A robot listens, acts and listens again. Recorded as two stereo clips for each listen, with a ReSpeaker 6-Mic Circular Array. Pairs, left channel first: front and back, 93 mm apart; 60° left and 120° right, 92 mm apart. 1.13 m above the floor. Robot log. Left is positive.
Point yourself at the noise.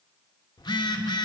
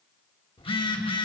note: The phone buzzing: 40° left.
cmd yaw +40
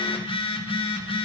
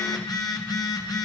note: The phone buzzing is now 15° left.
cmd yaw +15
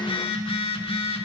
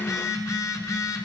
end: Facing the phone buzzing.